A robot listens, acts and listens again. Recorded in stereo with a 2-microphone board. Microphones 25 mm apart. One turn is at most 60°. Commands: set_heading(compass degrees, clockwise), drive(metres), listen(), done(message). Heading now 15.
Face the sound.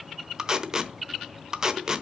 set_heading(40)
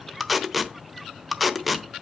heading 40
done("Found it: tape being pulled, straight ahead.")